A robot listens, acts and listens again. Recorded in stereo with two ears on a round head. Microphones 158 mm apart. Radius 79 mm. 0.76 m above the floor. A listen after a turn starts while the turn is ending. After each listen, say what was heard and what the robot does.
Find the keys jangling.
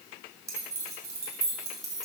The keys jangling: about 20° right or 160° right. Turn 20° right.
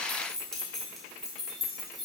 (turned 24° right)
Facing the keys jangling.